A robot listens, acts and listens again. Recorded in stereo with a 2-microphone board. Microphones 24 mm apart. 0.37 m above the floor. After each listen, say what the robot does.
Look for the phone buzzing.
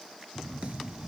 Turn 60° right.
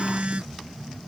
Turn 60° right.
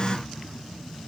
Turn 35° left.
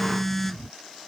Found it: a phone buzzing, straight ahead.